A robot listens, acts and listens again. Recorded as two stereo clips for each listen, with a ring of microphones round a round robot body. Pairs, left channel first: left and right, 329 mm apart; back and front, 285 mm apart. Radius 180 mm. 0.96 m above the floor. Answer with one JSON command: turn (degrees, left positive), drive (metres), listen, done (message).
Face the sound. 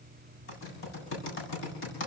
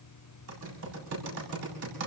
{"turn": 35}
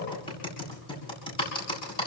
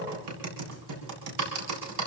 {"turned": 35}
{"turn": 15}
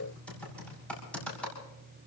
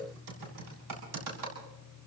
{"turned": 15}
{"done": "Facing the typing on a keyboard."}